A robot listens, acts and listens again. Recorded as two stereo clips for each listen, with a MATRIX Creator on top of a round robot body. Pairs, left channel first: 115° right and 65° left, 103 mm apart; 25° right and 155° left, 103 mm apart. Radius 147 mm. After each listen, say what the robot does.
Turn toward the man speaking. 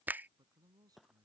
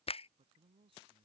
Turn 120° left.
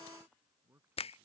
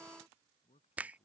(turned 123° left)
Facing the man speaking.